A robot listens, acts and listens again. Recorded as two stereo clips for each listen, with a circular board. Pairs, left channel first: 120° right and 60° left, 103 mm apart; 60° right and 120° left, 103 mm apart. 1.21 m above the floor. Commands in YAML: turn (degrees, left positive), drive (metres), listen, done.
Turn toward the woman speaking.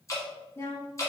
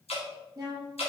turn: 175
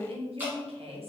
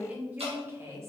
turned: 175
turn: 60
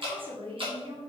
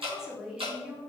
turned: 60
turn: 45
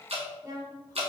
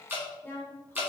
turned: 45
turn: 10
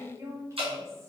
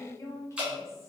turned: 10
done: "Found it: a woman speaking, straight ahead, 1 to 2 m away."